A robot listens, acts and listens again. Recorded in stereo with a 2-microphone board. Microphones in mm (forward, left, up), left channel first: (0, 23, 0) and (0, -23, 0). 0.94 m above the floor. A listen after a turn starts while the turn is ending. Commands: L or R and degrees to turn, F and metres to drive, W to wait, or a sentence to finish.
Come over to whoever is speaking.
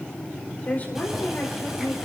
L35
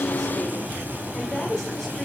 F1.0
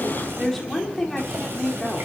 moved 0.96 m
F1.0
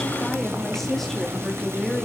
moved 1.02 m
F1.0
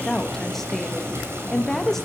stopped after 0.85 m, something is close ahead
Arrived at the woman speaking, straight ahead.